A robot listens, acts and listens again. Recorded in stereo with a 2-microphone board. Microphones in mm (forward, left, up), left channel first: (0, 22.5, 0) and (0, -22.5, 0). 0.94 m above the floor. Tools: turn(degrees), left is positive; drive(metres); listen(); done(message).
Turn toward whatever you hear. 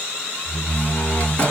turn(degrees=30)
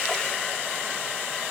listen()
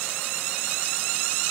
done("I heard a door slam, but can't make it out now. It was about straight ahead or 120° left.")